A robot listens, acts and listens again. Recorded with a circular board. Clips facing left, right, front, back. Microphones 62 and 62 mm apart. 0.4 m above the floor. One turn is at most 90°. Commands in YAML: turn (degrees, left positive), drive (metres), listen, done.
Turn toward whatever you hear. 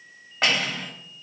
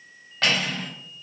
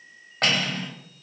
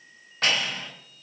turn: 25
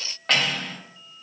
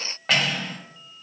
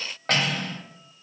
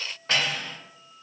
done: "Found it: cutlery clinking, straight ahead, 1 to 2 m away."